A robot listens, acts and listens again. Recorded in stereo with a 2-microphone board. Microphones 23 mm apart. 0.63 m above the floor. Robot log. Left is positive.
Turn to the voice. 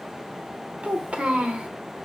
note: The child speaking: about 75° right or 105° right.
cmd yaw -75
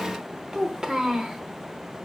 note: So it is at 30° right.
cmd yaw -30
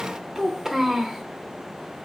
note: The child speaking is now 20° right.
cmd yaw -20
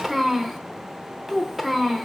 end: Facing the child speaking, under 1 m away.